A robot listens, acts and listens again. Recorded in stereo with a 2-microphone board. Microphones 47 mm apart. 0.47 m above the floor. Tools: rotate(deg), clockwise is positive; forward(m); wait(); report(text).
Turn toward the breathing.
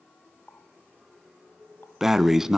rotate(30)
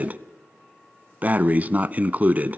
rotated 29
rotate(140)
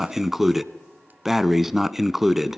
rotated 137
report("Found it: breathing, straight ahead, under 1 m away.")